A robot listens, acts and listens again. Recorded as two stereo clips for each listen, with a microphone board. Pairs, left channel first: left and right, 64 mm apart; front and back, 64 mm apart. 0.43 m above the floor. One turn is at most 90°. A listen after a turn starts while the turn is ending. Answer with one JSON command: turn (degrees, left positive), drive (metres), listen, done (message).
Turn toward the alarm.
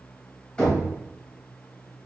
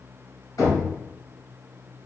{"listen": true}
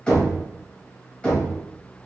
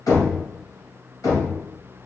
{"listen": true}
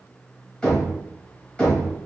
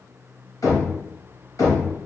{"done": "I can't make out an alarm, only knocking."}